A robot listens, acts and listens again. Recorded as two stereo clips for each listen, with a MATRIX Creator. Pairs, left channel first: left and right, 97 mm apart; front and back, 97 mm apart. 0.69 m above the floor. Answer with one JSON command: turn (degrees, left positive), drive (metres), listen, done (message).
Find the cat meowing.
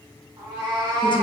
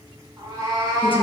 {"turn": -135}
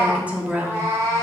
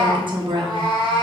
{"turn": -35}
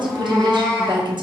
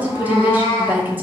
{"done": "Found it: a cat meowing, straight ahead, 1 to 2 m away."}